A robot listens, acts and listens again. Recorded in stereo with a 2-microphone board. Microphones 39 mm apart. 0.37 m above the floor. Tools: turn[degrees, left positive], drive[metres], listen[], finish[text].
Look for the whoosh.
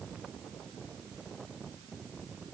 Action: listen[]
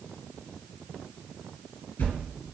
Thought: The whoosh: about 60° left or 120° left.
Action: turn[60]
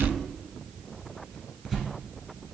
Action: finish[Facing the whoosh.]